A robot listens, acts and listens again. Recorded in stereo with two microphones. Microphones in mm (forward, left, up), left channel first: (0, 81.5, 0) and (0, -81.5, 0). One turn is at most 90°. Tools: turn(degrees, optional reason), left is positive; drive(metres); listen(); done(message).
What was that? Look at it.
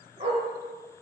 turn(degrees=-40, reason="The dog barking: about 40° right or 140° right.")
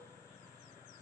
listen()
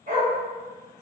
turn(degrees=-90, reason="So it is at 125° right.")
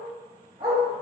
turn(degrees=-25, reason="The dog barking is now 25° right.")
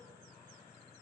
done("Facing the dog barking, 2 to 4 m away.")